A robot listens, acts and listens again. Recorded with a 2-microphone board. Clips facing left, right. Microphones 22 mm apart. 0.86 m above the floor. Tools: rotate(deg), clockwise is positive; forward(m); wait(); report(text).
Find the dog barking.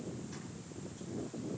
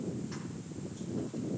wait()
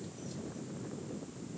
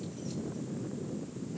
wait()
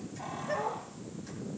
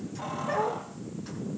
rotate(90)
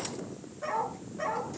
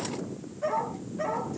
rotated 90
report("Facing the dog barking, over 4 m away.")